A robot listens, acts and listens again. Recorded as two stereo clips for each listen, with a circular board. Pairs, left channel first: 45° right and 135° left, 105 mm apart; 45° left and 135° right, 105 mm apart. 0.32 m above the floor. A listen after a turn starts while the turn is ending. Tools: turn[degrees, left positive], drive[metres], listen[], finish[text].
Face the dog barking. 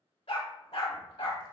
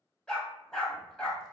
Thought: The dog barking: 35° right.
Action: turn[-35]
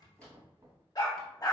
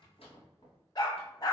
Action: finish[Facing the dog barking, under 1 m away.]